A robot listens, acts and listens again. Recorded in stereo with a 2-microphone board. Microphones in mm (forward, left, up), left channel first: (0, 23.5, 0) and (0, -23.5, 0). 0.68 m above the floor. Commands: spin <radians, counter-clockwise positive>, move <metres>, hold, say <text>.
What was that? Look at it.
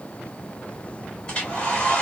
spin 0.44
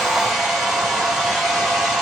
say Facing the hair dryer.